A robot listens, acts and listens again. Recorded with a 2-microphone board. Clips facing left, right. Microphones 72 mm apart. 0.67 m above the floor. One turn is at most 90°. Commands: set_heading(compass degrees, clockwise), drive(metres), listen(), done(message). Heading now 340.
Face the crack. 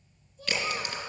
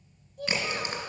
set_heading(10)
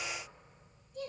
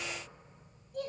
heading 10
listen()
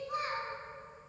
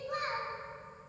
done("I heard a crack, but can't make it out now. It was about straight ahead or 120° right.")